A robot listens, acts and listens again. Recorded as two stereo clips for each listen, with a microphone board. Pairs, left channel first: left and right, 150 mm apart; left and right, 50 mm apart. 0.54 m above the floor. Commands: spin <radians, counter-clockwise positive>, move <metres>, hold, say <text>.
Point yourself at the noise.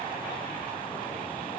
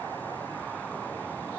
hold
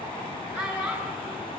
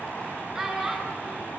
spin -0.35
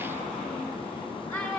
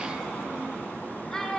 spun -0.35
say Facing the child speaking.